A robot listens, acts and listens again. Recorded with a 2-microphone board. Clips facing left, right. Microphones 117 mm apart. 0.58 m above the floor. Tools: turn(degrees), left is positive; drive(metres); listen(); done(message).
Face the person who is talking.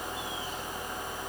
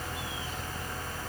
listen()
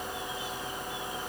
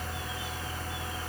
listen()
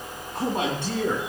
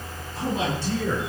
turn(degrees=65)
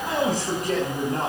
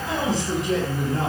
turn(degrees=50)
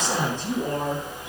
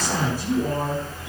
turn(degrees=-10)
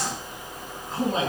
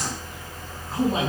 done("Facing the man speaking.")